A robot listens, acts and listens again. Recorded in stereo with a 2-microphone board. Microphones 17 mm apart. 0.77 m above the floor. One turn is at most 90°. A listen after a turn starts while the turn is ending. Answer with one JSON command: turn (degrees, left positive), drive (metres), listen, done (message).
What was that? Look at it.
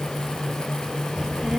{"turn": -65}
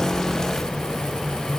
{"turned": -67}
{"done": "Facing the child speaking."}